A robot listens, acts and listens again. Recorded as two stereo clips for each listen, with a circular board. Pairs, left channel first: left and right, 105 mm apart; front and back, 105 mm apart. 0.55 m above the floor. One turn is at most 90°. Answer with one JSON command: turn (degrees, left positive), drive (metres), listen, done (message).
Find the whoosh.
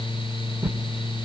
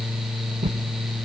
{"turn": -90}
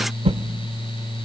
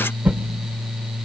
{"turn": -90}
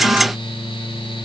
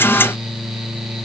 {"turn": -15}
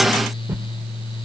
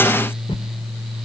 {"turn": -15}
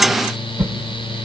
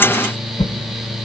{"done": "Facing the whoosh."}